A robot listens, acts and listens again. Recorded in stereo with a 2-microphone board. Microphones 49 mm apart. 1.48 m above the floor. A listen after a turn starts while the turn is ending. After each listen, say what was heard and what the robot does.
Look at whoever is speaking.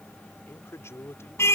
The man speaking: about 65° left or 115° left. Turn 65° left.
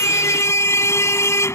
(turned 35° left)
Keep listening.
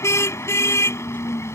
Keep listening.
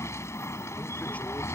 I heard a man speaking, but can't make it out now. It was about 30° left or 80° left.